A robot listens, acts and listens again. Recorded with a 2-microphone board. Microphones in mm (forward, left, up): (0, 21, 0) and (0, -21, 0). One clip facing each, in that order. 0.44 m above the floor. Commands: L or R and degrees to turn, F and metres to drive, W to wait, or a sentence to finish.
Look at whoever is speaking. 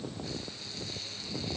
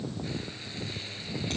W
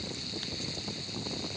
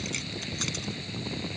W
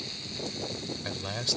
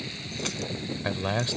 R30
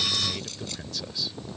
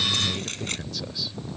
Found it: a man speaking, straight ahead.